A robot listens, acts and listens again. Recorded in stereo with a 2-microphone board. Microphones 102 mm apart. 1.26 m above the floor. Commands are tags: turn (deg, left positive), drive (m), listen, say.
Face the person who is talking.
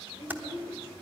<turn deg="-55"/>
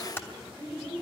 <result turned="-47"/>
<say>Facing the child speaking.</say>